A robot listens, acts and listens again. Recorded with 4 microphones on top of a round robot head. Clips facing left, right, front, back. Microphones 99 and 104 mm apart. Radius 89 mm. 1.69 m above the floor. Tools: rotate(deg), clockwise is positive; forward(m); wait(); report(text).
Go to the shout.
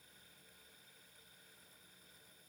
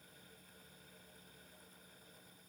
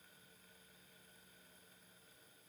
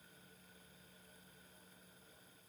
wait()
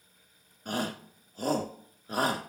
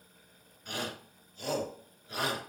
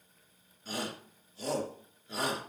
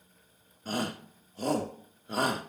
rotate(-140)
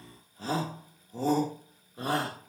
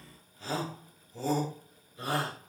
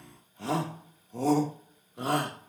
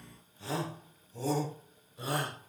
rotate(-30)
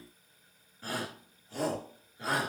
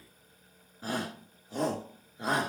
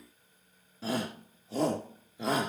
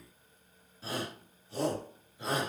rotate(15)
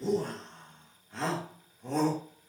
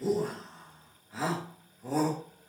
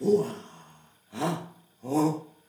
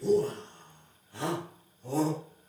forward(1.0)
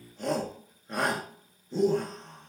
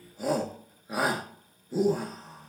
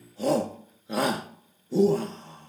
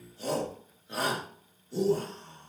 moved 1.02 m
forward(1.0)
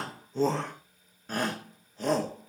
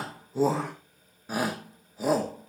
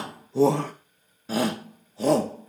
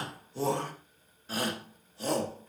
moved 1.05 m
forward(1.0)
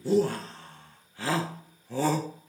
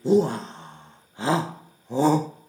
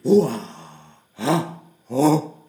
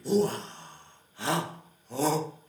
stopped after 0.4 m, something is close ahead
rotate(15)
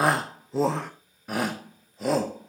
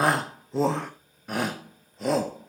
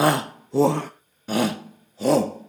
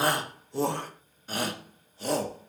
report("Arrived at the shout, straight ahead.")